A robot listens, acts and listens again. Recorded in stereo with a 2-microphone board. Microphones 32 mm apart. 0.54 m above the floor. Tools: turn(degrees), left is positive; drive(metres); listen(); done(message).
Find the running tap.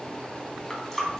turn(degrees=30)
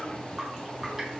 listen()
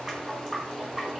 turn(degrees=-20)
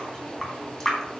done("Found it: a running tap, straight ahead.")